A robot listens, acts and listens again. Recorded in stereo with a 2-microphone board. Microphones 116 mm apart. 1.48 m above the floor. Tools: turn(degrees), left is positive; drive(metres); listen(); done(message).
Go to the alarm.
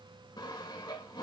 listen()
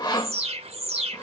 turn(degrees=-60)
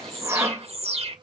turn(degrees=-60)
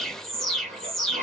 drive(metres=1.0)
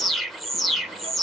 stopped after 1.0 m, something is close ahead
done("I am next to the alarm.")